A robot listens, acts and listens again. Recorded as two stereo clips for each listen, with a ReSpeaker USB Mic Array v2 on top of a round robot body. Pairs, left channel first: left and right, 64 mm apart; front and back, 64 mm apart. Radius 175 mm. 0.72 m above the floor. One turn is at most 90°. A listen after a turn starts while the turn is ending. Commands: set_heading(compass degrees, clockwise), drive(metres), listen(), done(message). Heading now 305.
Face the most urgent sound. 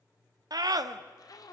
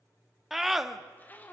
set_heading(35)
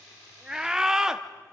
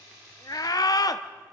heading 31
set_heading(41)
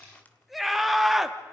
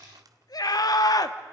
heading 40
done("Found it: a scream, straight ahead.")